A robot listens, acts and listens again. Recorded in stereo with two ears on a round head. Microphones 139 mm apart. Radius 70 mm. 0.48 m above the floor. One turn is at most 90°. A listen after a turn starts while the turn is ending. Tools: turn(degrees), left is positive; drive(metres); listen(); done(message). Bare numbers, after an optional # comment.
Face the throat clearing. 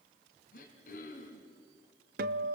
# The throat clearing: about 55° left or 125° left.
turn(55)
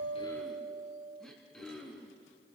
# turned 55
done("Found it: throat clearing, straight ahead, 2 to 4 m away.")